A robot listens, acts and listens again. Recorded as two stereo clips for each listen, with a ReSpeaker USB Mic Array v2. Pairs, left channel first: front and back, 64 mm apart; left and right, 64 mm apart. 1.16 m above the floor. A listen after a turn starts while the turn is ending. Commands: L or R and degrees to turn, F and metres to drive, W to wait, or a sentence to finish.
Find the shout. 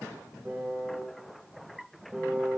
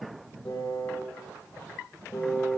W
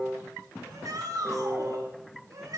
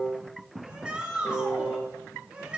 R165
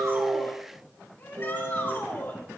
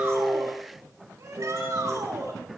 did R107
R55
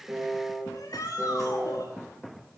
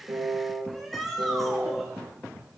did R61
Facing the shout, over 4 m away.